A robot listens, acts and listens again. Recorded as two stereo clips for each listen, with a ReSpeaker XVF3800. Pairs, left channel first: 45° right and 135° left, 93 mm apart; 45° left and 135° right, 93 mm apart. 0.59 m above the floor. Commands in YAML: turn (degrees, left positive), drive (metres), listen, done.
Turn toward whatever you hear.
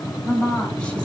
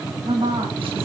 turn: -125
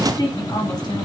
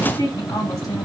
turn: -10
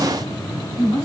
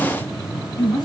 done: "Found it: a woman speaking, straight ahead, over 4 m away."